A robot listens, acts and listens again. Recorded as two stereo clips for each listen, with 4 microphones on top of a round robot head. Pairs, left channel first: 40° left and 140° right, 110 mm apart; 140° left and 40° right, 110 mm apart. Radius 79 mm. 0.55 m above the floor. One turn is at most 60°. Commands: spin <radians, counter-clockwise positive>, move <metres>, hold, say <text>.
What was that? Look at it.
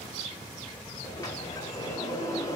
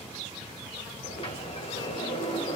spin 1.05
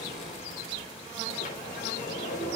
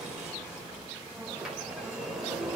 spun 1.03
spin 0.79
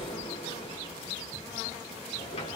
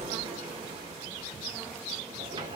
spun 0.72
say Found it: a sliding door, straight ahead, 1 to 2 m away.